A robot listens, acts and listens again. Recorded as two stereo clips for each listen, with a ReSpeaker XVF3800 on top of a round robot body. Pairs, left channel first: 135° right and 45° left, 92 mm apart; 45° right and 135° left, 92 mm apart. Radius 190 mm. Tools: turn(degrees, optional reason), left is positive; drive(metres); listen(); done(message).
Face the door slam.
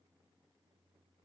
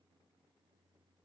listen()
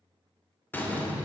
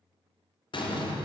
turn(degrees=-65, reason="The door slam: 65° right.")
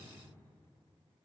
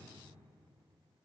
done("Facing where the door slam came from. I can't hear it now.")